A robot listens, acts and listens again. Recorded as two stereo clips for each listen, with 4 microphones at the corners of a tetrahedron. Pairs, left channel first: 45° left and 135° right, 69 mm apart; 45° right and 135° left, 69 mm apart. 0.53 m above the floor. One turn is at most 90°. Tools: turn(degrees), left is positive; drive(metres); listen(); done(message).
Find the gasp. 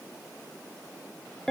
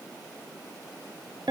listen()
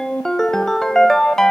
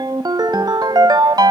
listen()
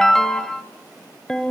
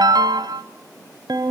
done("I can't make out a gasp, only a ringtone.")